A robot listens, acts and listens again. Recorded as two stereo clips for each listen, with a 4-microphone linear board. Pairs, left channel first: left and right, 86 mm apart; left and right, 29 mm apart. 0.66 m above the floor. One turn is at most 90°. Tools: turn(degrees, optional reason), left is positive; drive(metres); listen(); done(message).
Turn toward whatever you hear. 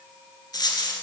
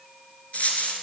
turn(degrees=50, reason="The dropped coin: about 50° left or 130° left.")
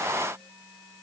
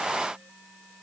listen()
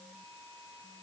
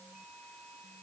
done("I heard a dropped coin, but can't make it out now. It was about straight ahead or 80° left.")